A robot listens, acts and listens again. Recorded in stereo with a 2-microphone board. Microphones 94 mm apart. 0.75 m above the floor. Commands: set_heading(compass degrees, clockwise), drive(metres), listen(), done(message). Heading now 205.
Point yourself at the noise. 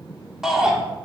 set_heading(235)
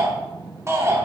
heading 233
set_heading(23)
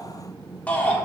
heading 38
set_heading(23)
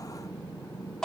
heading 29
done("Facing the shout, 1 to 2 m away.")